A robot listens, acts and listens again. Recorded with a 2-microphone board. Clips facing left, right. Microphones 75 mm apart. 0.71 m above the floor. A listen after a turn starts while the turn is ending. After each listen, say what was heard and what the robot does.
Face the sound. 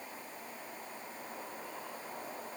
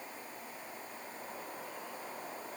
Keep listening.
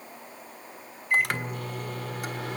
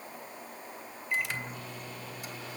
The microwave: about 65° left or 115° left. Turn 65° left.
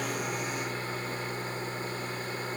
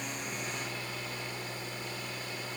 So it is at 45° left. Turn 45° left.
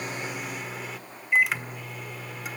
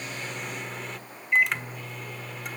Found it: a microwave, straight ahead.